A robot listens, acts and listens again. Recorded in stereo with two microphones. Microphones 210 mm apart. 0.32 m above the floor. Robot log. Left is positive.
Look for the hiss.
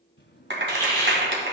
note: The hiss: about 15° left or 165° left.
cmd yaw +15
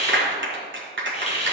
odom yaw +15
note: So it is at 150° left.
cmd yaw +150
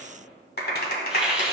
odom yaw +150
end: Found it: a hiss, straight ahead, 2 to 4 m away.